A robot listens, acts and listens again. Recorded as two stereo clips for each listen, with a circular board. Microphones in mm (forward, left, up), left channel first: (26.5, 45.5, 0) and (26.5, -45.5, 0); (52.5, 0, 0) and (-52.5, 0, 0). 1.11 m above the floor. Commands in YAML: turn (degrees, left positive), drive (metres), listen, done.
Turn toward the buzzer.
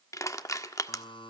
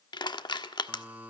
turn: 105
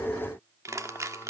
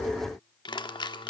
turn: 30
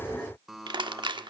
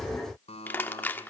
done: "Facing the buzzer."